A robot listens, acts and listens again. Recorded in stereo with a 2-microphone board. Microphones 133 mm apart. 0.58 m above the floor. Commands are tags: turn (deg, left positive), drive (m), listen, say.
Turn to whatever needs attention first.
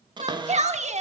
<turn deg="-55"/>
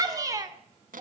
<turn deg="-30"/>
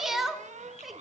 <say>Facing the shout, 1 to 2 m away.</say>